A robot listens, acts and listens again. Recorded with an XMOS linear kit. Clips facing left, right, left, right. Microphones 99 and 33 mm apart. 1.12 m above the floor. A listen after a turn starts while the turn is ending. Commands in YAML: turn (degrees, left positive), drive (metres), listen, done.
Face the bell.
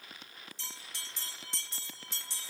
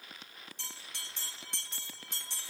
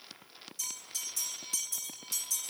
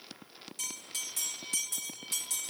turn: -55
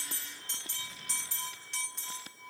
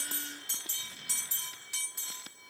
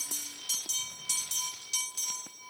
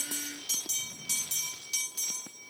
done: "Facing the bell."